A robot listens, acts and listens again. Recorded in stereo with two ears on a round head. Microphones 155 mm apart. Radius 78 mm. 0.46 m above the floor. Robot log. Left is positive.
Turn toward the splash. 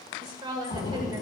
note: The splash: about 40° left or 140° left.
cmd yaw +40
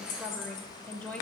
cmd idle
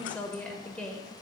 end: I heard a splash, but can't make it out now. It was about straight ahead or 100° left.